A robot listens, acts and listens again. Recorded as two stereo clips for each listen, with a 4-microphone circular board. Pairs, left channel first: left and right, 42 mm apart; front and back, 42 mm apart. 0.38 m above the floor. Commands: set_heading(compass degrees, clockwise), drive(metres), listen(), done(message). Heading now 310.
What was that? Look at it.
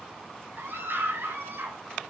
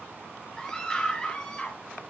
set_heading(30)
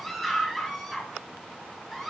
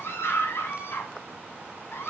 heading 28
done("Facing the scream.")